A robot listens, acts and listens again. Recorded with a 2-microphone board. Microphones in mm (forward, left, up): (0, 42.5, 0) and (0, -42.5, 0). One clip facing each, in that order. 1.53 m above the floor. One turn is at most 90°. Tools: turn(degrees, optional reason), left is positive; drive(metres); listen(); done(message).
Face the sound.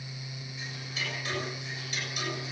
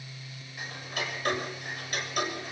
turn(degrees=-55, reason="The ticking: about 55° right or 125° right.")
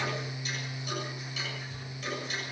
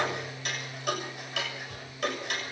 turn(degrees=-70, reason="So it is at 70° right.")
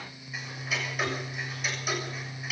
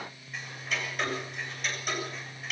done("Found it: ticking, straight ahead.")